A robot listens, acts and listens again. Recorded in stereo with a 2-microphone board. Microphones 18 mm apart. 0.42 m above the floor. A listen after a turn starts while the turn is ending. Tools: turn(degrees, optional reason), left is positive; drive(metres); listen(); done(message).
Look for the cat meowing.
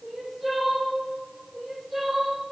listen()
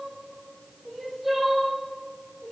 listen()
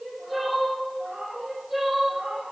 turn(degrees=-90)
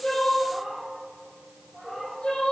done("Facing the cat meowing, over 4 m away.")